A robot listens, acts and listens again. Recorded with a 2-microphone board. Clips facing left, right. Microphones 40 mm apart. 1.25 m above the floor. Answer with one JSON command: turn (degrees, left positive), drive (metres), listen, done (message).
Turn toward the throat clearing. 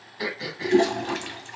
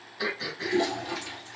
{"turn": 15}
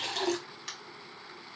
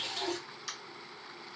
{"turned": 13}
{"turn": 150}
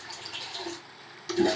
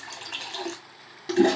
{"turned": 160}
{"turn": -10}
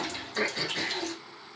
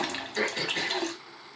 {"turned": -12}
{"done": "Found it: throat clearing, straight ahead."}